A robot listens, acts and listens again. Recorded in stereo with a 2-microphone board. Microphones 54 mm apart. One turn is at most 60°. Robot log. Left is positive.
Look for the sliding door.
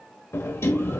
note: The sliding door: about 55° left or 125° left.
cmd yaw +55
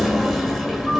end: Facing the sliding door, 1 to 2 m away.